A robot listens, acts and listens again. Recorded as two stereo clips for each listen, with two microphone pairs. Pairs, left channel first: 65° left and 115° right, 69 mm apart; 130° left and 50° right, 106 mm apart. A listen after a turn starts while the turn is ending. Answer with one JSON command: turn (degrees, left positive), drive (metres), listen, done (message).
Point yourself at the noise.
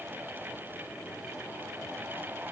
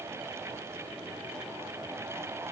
{"listen": true}
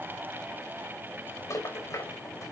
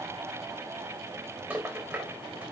{"turn": 30}
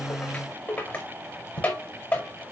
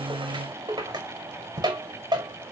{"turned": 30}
{"done": "Found it: a rattle, straight ahead, over 4 m away."}